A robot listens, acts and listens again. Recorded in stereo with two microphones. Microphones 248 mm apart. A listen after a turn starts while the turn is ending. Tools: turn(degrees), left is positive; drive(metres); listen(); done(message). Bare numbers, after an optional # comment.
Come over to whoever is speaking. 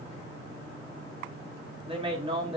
# The man speaking: about 25° right or 155° right.
turn(-25)
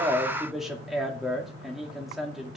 drive(1.0)
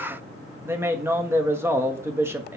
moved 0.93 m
# The man speaking is now 10° right.
turn(-10)
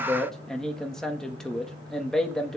drive(1.0)
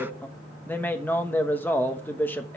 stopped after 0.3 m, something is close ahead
# The man speaking is now 10° left.
turn(10)
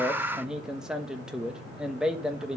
done("I am next to the man speaking.")